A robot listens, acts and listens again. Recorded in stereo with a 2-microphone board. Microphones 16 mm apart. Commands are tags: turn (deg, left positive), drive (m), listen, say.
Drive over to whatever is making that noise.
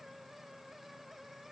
<listen/>
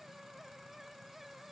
<listen/>
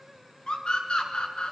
<turn deg="75"/>
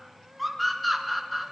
<drive m="1.0"/>
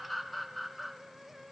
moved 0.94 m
<turn deg="10"/>
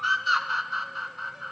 <drive m="1.0"/>
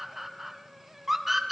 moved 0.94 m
<turn deg="-10"/>
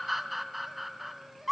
<drive m="1.0"/>
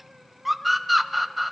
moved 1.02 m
<drive m="1.0"/>
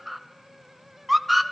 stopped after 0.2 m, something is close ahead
<say>Arrived at the scream, straight ahead.</say>